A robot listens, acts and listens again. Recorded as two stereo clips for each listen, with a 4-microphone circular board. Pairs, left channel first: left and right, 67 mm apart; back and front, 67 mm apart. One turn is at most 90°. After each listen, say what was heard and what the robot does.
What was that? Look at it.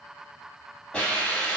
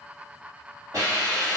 The hiss: 15° left. Turn 15° left.
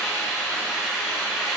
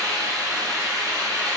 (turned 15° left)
Facing the hiss.